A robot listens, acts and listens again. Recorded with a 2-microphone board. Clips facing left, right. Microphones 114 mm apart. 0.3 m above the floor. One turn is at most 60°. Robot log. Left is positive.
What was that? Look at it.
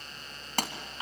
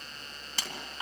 note: The pop: about 55° left or 125° left.
cmd yaw +55
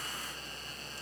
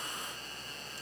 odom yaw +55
cmd idle
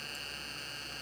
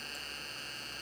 end: I heard a pop, but can't make it out now. It was about straight ahead or 70° left.